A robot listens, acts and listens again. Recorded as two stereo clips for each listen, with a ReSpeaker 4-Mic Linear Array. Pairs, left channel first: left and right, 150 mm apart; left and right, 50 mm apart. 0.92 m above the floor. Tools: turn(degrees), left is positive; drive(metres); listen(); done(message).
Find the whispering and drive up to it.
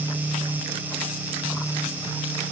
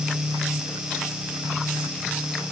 listen()
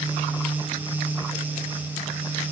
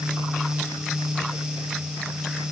listen()
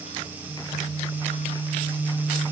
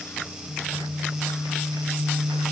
done("I can't make out whispering.")